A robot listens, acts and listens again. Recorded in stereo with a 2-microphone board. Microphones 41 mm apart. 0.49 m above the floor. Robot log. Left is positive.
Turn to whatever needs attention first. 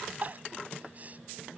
note: The crying: about 40° right or 140° right.
cmd yaw -40
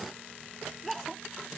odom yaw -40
end: Facing the crying.